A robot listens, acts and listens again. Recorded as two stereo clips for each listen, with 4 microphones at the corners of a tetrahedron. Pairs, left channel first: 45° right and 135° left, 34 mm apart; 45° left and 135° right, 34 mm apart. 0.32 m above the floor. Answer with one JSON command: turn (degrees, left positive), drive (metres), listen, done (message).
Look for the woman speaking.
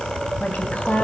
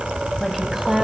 {"turn": -60}
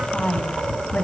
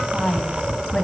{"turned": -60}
{"turn": -20}
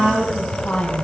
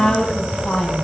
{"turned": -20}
{"turn": -15}
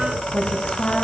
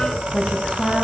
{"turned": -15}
{"turn": -10}
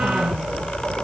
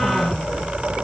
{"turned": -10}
{"listen": true}
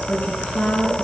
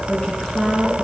{"turn": -10}
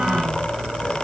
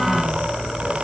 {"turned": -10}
{"listen": true}
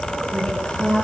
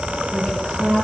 {"done": "Facing the woman speaking."}